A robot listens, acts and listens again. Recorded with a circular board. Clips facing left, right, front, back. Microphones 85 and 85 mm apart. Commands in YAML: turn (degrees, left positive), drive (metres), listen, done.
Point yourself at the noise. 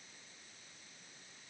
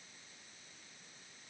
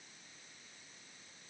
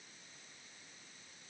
listen: true
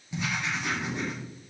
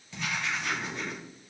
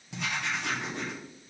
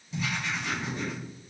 turn: 20
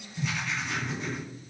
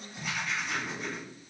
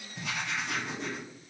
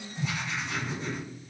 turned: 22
done: "Found it: writing, straight ahead."